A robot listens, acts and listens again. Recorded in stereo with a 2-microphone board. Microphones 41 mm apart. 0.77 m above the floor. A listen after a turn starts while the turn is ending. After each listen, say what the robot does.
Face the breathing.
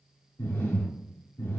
Turn 70° left.
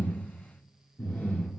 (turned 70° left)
Turn 40° left.
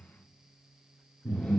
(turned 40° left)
Turn 20° left.
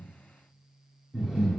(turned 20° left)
Turn 10° right.
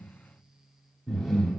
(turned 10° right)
Facing the breathing.